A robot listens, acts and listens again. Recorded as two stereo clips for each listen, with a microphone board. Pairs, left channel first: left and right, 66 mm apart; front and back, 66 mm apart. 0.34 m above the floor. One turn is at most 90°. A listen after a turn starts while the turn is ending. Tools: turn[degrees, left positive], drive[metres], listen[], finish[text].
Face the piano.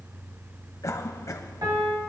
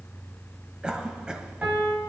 Thought: The piano: 110° right.
Action: turn[-90]
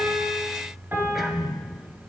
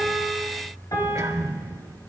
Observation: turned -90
Thought: The piano is now 30° right.
Action: turn[-30]
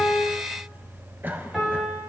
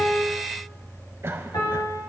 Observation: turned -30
Action: finish[Facing the piano.]